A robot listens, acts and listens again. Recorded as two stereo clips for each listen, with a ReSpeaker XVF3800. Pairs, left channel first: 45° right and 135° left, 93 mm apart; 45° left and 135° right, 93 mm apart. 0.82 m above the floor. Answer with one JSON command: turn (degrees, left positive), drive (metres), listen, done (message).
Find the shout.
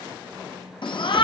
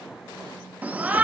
{"turn": -65}
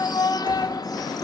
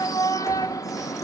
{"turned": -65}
{"done": "Found it: a shout, straight ahead."}